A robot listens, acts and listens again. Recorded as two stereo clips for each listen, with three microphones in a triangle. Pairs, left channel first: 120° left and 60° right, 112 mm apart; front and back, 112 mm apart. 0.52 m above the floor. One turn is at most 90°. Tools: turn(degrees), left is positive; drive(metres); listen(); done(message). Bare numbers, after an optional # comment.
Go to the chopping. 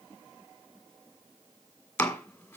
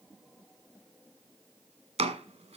# The chopping: 165° right.
turn(-90)
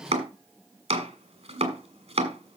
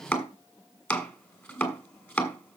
# The chopping is now 70° right.
turn(-70)
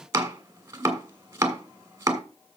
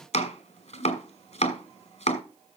drive(1.0)
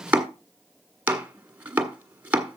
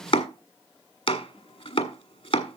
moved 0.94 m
# The chopping is now 15° left.
turn(15)
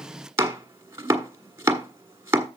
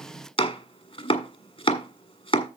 drive(1.0)
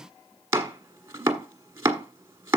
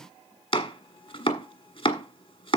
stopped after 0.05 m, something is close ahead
done("Arrived at the chopping, straight ahead.")